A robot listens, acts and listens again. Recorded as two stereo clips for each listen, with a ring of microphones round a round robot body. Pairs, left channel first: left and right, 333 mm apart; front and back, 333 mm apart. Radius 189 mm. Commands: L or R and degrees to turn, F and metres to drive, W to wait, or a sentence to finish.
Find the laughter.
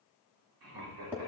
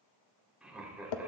R95
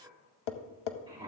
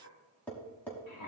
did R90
R15
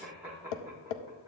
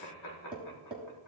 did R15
R10
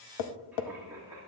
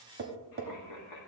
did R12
R10
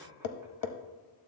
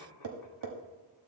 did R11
Found it: laughter, straight ahead, 1 to 2 m away.